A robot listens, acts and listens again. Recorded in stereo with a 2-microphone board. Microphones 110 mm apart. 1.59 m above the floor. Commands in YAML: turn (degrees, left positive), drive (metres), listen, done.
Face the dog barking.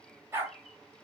turn: -25
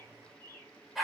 done: "Facing the dog barking, 1 to 2 m away."